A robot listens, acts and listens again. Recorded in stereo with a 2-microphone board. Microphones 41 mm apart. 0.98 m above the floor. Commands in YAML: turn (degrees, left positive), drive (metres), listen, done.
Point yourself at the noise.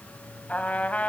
turn: 35
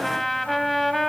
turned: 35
done: "Found it: a trumpet, straight ahead."